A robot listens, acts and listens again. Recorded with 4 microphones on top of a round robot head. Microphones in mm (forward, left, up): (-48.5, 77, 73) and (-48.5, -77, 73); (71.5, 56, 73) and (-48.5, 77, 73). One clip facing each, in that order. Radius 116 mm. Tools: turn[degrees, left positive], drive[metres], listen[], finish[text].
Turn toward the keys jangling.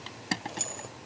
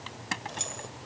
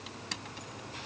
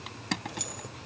Thought: The keys jangling: 175° left.
Action: turn[175]
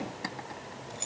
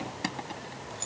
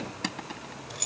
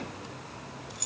Thought: The keys jangling is now 15° left.
Action: turn[15]
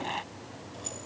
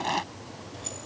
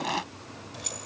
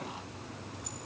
Action: finish[Facing the keys jangling.]